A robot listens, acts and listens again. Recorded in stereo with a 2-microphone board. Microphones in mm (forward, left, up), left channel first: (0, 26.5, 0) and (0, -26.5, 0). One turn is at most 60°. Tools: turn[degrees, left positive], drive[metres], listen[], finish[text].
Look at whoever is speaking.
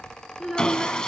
Action: turn[-30]
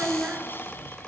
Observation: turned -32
Thought: So it is at 150° right.
Action: turn[-60]
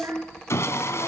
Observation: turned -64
Thought: The child speaking is now 80° right.
Action: turn[-60]
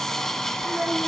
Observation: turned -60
Thought: Nothing new. It was at 20° right.
Action: turn[-20]
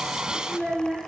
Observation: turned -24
Action: finish[Facing the child speaking, over 4 m away.]